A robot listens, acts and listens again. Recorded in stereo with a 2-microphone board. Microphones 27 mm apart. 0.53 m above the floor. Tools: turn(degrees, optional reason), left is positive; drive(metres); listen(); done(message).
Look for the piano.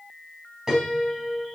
turn(degrees=-20, reason="The piano: about 20° right or 160° right.")
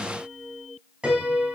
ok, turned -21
turn(degrees=-140, reason="So it is at 140° right.")
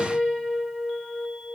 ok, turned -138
done("Facing the piano, over 4 m away.")